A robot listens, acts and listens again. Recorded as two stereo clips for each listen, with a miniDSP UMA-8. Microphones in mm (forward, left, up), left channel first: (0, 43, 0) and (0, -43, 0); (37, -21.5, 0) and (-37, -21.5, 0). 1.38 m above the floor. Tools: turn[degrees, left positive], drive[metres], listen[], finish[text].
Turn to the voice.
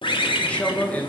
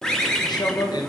Thought: The man speaking: 15° left.
Action: turn[15]
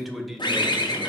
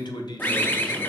Action: finish[Facing the man speaking, 1 to 2 m away.]